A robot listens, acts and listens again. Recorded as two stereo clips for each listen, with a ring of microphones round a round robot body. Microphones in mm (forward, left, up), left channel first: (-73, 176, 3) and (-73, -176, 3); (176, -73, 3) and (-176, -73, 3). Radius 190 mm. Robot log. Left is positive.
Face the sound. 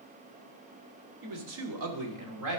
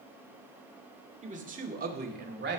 note: The man speaking: 120° right.
cmd yaw -120
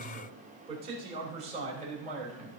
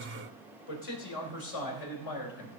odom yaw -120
note: The man speaking is now 20° right.
cmd yaw -20
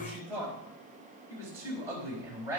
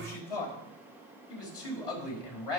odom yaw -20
end: Found it: a man speaking, straight ahead, over 4 m away.